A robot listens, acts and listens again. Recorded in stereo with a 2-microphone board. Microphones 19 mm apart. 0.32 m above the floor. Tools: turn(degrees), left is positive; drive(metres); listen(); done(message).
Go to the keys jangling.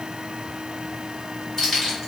turn(degrees=30)
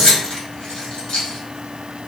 turn(degrees=120)
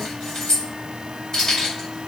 turn(degrees=40)
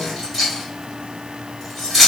turn(degrees=-10)
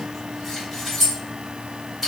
drive(metres=1.0)
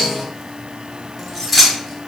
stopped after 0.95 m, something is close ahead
turn(degrees=-10)
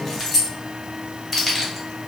done("Arrived at the keys jangling, straight ahead.")